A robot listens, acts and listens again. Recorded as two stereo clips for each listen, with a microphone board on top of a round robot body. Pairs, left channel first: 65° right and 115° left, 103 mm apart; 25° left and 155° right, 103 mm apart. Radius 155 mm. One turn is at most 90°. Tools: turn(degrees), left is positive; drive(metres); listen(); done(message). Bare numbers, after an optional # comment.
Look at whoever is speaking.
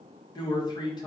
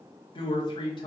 # The man speaking: 20° right.
turn(-20)
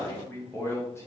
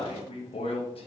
done("Found it: a man speaking, straight ahead.")